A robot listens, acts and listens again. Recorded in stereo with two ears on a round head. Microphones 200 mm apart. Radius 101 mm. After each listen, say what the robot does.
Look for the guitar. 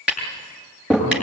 Keep listening.
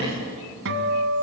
Turn 60° right.
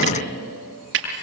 Keep listening.
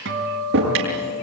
Turn 55° right.
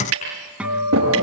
Found it: a guitar, straight ahead, 2 to 4 m away.